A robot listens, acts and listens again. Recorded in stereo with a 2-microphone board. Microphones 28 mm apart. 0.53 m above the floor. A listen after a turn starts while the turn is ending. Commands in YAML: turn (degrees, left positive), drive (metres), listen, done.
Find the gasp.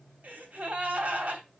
turn: -70
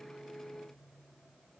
listen: true
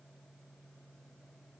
done: "I heard a gasp, but can't make it out now. It was about straight ahead or 40° right."